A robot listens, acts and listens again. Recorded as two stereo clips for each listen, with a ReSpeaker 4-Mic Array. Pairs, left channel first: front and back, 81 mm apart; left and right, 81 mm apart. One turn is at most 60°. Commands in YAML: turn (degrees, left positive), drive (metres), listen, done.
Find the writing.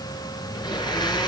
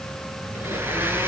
listen: true
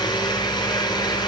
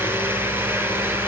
listen: true
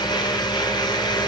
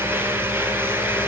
done: "I can't make out writing, only a blender."